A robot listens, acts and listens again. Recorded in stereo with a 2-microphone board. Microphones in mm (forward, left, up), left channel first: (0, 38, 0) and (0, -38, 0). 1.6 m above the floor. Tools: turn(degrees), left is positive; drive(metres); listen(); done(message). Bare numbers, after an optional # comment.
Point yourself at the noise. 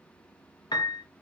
# The piano: about 70° left or 110° left.
turn(70)
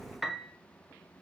done("Found it: a piano, straight ahead, under 1 m away.")